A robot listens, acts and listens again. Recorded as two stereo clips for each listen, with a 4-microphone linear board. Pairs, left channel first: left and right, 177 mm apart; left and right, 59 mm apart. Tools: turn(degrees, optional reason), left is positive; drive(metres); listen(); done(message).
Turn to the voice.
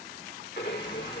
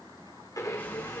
listen()
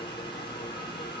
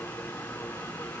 listen()
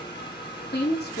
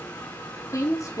turn(degrees=70, reason="The woman speaking: about 70° left or 110° left.")
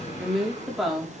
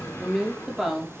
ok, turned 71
done("Found it: a woman speaking, straight ahead.")